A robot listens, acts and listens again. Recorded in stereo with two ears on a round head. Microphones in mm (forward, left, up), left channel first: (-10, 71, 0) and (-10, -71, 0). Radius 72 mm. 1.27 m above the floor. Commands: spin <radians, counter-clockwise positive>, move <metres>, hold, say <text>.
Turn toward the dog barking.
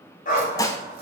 spin 0.87
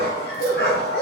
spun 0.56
spin 1.83
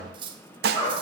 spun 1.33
spin 0.70
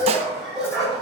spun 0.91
say Found it: a dog barking, straight ahead.